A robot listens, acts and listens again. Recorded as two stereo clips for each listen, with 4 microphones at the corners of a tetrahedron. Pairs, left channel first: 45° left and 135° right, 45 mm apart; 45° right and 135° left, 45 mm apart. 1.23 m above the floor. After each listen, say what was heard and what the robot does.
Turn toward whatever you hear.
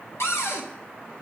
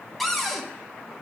The cupboard door: 40° left. Turn 40° left.
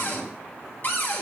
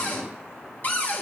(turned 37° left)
Facing the cupboard door, 1 to 2 m away.